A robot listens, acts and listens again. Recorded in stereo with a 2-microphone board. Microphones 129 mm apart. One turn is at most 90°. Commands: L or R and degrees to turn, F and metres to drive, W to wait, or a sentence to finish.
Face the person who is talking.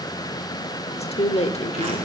L55
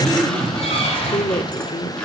L50
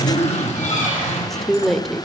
Found it: a woman speaking, straight ahead.